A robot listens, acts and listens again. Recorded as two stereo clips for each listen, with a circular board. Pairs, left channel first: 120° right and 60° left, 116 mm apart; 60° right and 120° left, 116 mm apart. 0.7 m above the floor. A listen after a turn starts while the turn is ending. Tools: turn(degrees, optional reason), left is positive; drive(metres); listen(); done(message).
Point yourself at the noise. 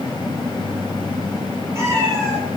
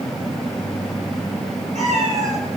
turn(degrees=125, reason="The cat meowing: 125° left.")
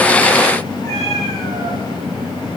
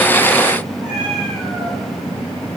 turn(degrees=35, reason="The cat meowing is now 35° left.")
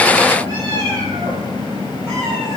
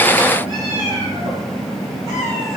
done("Found it: a cat meowing, straight ahead.")